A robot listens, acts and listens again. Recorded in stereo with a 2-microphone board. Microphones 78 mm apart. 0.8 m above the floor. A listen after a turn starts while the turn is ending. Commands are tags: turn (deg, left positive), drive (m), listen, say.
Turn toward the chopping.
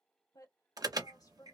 <listen/>
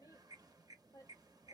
<listen/>
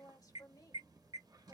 <say>I can't make out chopping, only a woman speaking and an alarm.</say>